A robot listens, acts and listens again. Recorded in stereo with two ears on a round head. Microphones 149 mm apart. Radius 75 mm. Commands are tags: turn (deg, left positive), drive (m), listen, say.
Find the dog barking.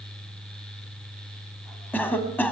<listen/>
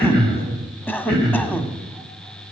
<listen/>
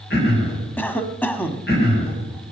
<say>I can't make out a dog barking to turn to.</say>